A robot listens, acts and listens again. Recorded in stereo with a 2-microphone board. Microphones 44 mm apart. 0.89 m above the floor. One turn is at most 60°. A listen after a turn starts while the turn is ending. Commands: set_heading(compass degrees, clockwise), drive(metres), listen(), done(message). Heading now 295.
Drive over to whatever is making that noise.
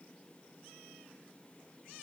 listen()
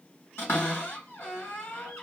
set_heading(235)
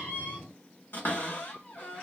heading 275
set_heading(215)
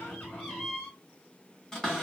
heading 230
set_heading(210)
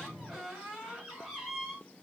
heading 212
drive(1.0)
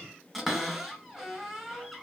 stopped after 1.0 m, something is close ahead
done("I am next to the cupboard door.")